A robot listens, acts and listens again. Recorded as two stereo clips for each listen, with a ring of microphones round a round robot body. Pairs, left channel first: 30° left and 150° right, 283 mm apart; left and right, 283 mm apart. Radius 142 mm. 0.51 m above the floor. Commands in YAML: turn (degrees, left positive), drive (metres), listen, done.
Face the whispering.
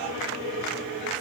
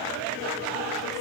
listen: true
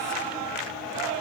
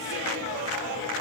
listen: true
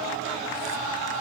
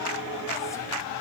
done: "I can't make out whispering to turn to."